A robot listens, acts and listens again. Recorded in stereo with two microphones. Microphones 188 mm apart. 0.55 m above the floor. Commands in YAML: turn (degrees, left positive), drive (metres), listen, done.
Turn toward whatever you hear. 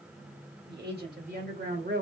turn: -65
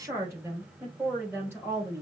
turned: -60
turn: -10
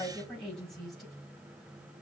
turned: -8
done: "Facing the woman speaking, 2 to 4 m away."